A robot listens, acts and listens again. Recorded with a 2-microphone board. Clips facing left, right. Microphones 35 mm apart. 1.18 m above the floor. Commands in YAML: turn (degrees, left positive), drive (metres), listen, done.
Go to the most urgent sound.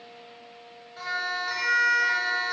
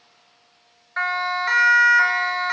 turn: -90
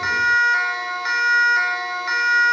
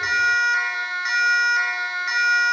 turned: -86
drive: 1.0
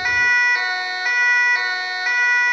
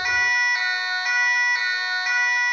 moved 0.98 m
drive: 1.0
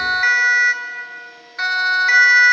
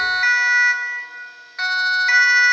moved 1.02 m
drive: 1.0
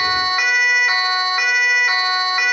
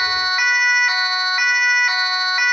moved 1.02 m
drive: 1.0
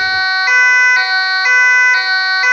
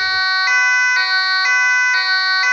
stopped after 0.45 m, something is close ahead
done: "I am next to the siren."